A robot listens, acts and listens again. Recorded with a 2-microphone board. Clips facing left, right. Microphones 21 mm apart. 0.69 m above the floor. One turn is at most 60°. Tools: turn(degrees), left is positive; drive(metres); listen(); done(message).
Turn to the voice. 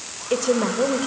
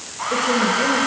turn(degrees=45)
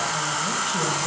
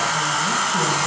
listen()
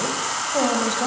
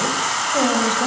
done("Found it: a woman speaking, straight ahead.")